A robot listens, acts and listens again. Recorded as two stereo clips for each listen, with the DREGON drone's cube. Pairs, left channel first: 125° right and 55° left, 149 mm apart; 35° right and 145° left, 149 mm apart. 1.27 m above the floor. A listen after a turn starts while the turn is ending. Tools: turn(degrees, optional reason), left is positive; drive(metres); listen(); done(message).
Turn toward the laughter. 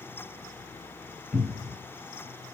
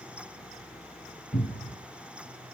listen()
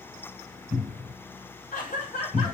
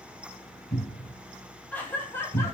turn(degrees=-105, reason="The laughter: 105° right.")
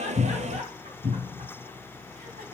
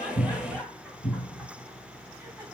turn(degrees=55, reason="The laughter is now 55° left.")
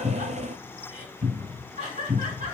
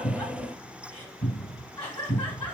turn(degrees=20, reason="The laughter is now 20° left.")
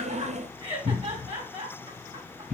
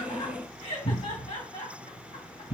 done("Facing the laughter, 2 to 4 m away.")